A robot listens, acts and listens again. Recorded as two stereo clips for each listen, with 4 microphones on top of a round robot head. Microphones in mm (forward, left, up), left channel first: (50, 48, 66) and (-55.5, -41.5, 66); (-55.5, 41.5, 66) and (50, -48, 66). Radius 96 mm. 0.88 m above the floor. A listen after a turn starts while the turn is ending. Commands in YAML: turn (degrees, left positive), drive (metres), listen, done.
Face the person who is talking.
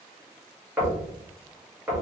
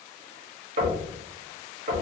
listen: true
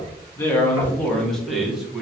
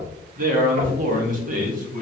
turn: -60
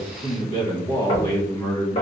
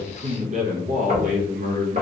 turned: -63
turn: -35
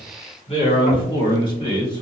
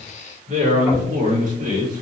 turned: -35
turn: -15
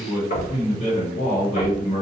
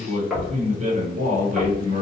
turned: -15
done: "Facing the man speaking."